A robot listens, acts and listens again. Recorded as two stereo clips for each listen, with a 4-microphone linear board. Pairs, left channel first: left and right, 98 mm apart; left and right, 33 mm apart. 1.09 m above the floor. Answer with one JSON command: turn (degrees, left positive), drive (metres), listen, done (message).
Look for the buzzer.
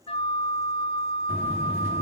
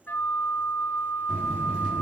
{"turn": -20}
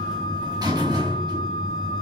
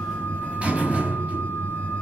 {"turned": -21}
{"turn": -140}
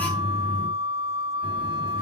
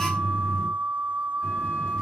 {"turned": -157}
{"turn": 15}
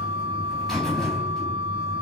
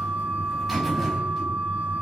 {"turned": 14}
{"done": "Facing the buzzer, over 4 m away."}